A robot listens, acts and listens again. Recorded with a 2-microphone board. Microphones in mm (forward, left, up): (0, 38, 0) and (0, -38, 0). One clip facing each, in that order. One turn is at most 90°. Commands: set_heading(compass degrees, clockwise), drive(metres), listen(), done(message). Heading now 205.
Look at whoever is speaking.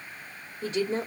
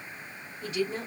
set_heading(175)
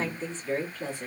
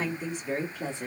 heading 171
set_heading(191)
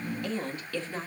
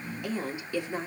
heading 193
set_heading(213)
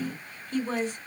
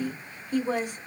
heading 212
set_heading(227)
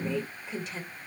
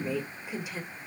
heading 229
set_heading(239)
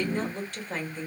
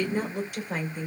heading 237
set_heading(252)
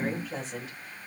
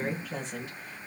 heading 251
done("Found it: a woman speaking, straight ahead, 2 to 4 m away.")